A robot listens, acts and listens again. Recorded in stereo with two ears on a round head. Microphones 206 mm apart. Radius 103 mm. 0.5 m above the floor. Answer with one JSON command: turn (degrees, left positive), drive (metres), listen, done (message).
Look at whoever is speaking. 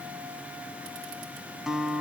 {"listen": true}
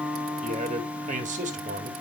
{"turn": -35}
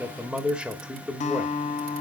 {"done": "Found it: a man speaking, straight ahead, 1 to 2 m away."}